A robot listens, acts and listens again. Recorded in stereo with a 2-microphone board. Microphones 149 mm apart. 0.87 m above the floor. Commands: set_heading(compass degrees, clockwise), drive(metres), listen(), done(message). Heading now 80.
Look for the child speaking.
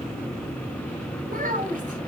set_heading(145)
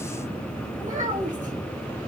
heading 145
set_heading(205)
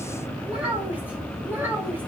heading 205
set_heading(215)
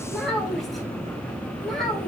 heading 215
done("Found it: a child speaking, straight ahead.")